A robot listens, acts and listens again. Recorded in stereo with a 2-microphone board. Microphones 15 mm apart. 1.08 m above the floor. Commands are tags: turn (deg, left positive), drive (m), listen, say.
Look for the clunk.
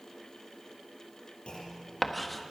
<turn deg="70"/>
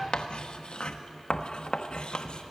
<listen/>
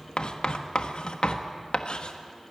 <say>I heard a clunk, but can't make it out now. It was about straight ahead or 40° left.</say>